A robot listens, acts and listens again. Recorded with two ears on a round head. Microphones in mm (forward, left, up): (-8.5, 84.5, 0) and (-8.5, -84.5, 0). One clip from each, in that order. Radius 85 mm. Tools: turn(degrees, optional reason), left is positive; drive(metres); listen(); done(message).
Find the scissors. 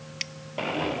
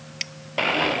turn(degrees=-30)
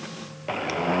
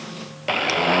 listen()
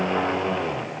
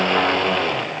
listen()
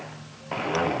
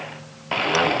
done("I heard scissors, but can't make it out now. It was about 25° left or 145° right.")